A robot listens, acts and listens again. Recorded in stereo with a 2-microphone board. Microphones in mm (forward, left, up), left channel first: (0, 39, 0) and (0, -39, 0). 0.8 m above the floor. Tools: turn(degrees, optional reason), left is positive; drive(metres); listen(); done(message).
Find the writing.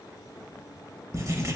turn(degrees=-40, reason="The writing: about 40° right or 140° right.")
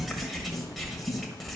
done("Found it: writing, straight ahead, 1 to 2 m away.")